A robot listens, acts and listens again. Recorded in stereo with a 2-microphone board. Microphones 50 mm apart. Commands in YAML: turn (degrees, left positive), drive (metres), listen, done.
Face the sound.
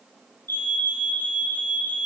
turn: 45
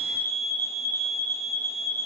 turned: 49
turn: 70
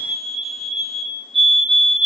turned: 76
done: "Found it: a fire alarm, straight ahead, 2 to 4 m away."